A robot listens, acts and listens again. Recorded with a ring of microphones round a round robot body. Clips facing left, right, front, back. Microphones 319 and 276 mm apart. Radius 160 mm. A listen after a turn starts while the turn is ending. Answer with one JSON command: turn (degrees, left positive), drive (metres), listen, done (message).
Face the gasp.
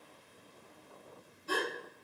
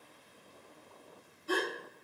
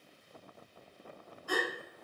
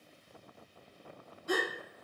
{"turn": 110}
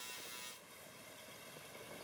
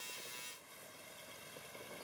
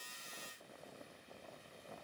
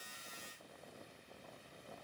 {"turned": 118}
{"done": "I heard a gasp from this way, but can't make it out now."}